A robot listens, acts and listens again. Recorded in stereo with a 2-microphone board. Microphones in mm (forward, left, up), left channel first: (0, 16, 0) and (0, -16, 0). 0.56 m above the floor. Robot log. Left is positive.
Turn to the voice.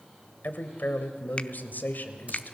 note: The man speaking: about 70° left or 110° left.
cmd yaw +70
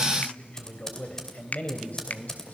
note: So it is at 55° left.
cmd yaw +55
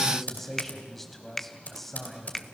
note: The man speaking is now 10° left.
cmd yaw +10
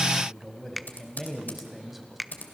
end: Facing the man speaking, 2 to 4 m away.